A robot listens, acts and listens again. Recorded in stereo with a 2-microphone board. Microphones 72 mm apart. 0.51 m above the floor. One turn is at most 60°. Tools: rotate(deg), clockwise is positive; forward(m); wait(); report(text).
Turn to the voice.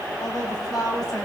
rotate(-60)
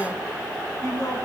rotate(-50)
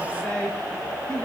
rotate(-15)
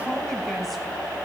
wait()
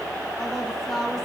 report("Facing the woman speaking, 2 to 4 m away.")